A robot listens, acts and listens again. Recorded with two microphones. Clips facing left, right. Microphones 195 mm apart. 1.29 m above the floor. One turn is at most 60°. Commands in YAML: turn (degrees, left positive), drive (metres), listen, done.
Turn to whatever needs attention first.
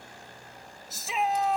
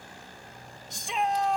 turn: 30
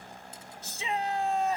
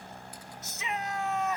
turn: 60
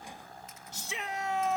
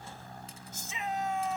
turn: 60
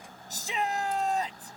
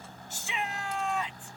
turn: 40
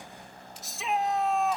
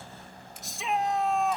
done: "Found it: a shout, straight ahead."